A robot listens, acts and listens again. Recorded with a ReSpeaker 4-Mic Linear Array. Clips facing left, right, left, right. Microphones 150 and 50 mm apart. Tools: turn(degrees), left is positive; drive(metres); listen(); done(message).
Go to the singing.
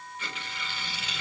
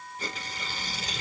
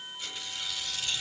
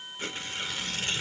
listen()
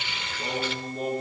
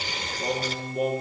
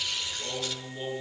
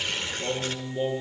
turn(degrees=-30)
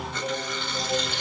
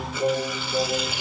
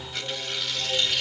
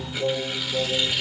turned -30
turn(degrees=-135)
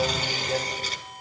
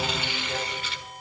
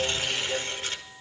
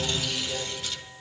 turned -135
turn(degrees=10)
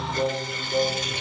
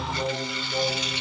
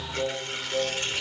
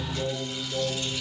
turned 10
drive(metres=1.0)
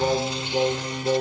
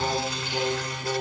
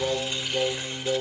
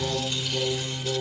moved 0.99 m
drive(metres=1.0)
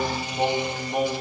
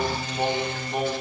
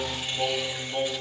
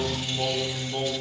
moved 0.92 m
drive(metres=1.0)
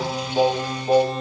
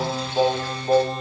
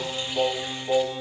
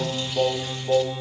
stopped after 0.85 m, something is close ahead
done("Arrived at the singing, straight ahead.")